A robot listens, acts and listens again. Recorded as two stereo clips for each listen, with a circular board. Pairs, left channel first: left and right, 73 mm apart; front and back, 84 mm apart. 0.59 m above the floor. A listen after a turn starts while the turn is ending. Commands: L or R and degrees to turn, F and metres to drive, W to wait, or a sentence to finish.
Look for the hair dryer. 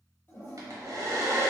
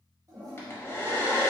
R60
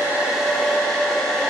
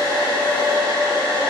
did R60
L10
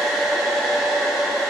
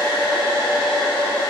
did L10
Facing the hair dryer, under 1 m away.